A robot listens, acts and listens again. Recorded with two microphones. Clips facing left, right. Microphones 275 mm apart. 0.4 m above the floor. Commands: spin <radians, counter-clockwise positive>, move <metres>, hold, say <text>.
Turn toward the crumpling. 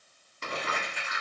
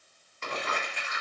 spin 0.70
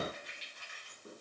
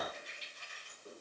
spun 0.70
spin 1.75
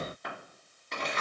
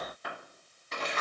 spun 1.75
say Facing the crumpling, 1 to 2 m away.